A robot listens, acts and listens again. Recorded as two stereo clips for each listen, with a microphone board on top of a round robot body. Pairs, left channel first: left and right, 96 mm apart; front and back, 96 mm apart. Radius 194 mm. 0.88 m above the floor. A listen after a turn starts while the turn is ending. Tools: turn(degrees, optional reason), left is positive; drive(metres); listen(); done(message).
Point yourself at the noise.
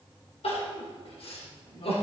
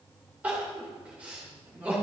turn(degrees=105, reason="The crying: 105° left.")
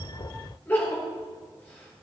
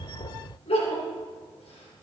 turn(degrees=20, reason="The crying is now 20° left.")
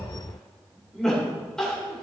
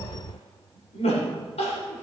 done("Facing the crying, 2 to 4 m away.")